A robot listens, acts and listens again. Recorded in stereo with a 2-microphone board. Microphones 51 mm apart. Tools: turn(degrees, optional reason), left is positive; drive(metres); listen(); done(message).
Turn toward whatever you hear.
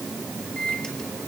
turn(degrees=20, reason="The microwave: about 20° left or 160° left.")
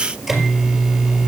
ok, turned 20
done("Facing the microwave.")